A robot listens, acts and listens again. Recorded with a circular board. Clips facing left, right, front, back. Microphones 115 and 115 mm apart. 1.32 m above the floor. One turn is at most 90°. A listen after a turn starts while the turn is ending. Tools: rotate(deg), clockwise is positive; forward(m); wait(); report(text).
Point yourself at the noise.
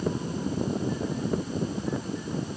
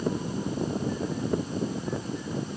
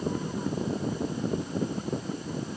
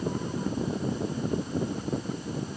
wait()
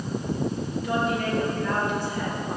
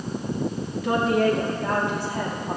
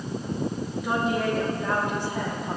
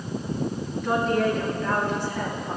rotate(75)
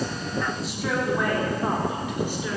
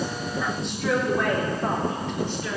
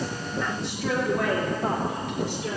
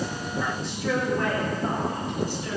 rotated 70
rotate(-10)
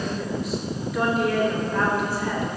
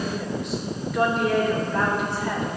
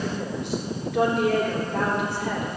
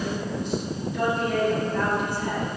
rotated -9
report("Facing the woman speaking.")